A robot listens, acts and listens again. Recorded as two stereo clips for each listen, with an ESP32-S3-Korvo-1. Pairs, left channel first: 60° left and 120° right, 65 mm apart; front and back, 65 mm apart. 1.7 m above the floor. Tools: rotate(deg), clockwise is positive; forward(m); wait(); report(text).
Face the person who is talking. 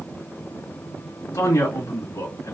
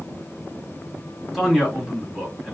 rotate(-90)
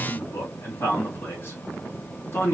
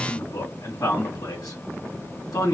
rotate(-10)
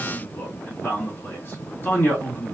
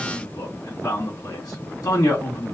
report("Facing the man speaking, 2 to 4 m away.")